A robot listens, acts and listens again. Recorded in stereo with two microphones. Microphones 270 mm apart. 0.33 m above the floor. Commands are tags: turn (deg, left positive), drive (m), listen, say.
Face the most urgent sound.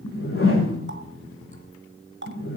<listen/>
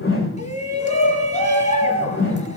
<turn deg="25"/>
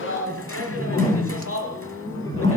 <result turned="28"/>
<turn deg="125"/>
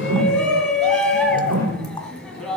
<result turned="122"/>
<say>Facing the shout.</say>